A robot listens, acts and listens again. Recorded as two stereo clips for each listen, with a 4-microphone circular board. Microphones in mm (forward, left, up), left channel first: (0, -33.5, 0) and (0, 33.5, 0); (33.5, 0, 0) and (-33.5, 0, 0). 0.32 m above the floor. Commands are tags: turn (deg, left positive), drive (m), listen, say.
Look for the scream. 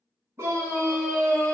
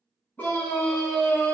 <turn deg="55"/>
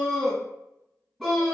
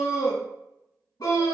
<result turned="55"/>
<say>Found it: a scream, straight ahead.</say>